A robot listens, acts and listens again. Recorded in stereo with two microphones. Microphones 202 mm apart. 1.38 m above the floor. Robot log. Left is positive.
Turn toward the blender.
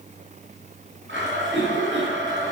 note: The blender: about 70° right or 110° right.
cmd yaw -70
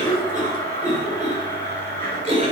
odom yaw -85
note: So it is at 10° left.
cmd yaw +10
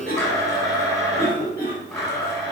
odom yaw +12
end: Facing the blender.